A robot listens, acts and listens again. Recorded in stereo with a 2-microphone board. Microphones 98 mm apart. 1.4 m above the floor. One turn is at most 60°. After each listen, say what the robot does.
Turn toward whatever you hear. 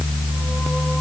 Keep listening.
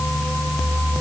Keep listening.
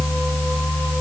I can't make out anything.